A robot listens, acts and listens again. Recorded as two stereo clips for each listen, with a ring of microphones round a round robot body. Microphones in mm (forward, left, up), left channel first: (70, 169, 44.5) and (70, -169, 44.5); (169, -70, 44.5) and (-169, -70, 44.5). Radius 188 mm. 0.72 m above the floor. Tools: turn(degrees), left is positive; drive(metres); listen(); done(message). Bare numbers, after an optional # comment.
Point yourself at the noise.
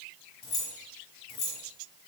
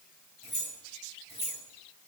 # The keys jangling: 75° left.
turn(75)
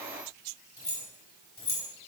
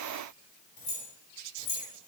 # The keys jangling is now 25° left.
turn(25)
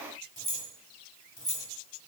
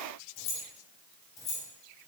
# The keys jangling is now 10° left.
turn(10)
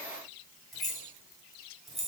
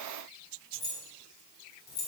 done("Found it: keys jangling, straight ahead.")